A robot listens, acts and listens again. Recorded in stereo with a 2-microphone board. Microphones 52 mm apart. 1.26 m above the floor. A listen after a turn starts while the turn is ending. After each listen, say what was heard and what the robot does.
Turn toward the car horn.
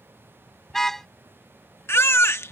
Turn 30° left.
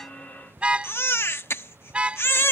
So it is at 25° right. Turn 25° right.
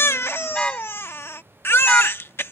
The car horn is now 20° left. Turn 20° left.
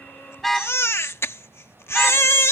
Found it: a car horn, straight ahead.